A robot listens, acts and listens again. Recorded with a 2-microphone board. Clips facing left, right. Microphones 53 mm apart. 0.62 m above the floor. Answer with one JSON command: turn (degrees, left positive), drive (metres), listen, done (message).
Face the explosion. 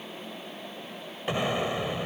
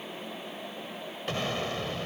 {"turn": 15}
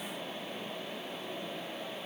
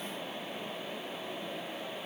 {"listen": true}
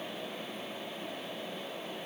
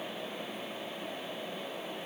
{"done": "I heard an explosion, but can't make it out now. It was about straight ahead or 150° left."}